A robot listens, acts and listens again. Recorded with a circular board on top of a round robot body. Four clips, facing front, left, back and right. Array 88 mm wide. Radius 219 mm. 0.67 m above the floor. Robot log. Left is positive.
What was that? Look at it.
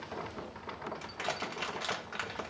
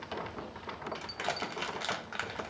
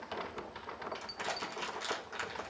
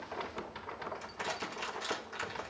note: The crushing: 70° left.
cmd yaw +70
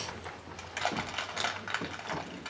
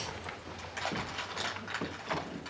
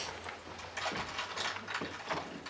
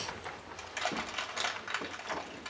note: The crushing is now 15° right.
cmd yaw -15
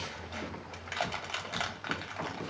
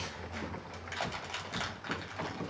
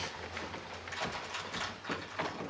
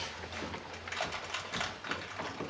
end: Found it: crushing, straight ahead.